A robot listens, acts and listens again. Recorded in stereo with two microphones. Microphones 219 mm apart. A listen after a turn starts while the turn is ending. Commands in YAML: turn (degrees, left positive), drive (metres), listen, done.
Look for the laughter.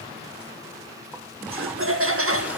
turn: -90
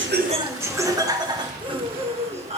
turn: -30
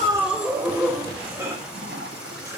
turn: -10
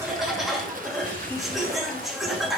done: "Found it: laughter, straight ahead."